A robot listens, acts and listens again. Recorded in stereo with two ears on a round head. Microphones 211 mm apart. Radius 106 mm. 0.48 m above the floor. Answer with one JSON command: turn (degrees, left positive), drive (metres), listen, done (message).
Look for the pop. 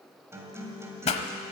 {"turn": 30}
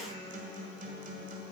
{"listen": true}
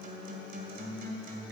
{"done": "I heard a pop, but can't make it out now. It was about straight ahead or 120° left."}